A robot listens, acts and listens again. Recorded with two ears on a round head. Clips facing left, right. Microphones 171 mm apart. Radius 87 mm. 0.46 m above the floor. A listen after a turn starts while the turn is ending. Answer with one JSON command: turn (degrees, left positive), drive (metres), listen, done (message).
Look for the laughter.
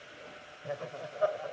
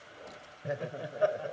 {"turn": -25}
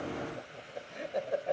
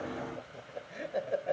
{"done": "Facing the laughter."}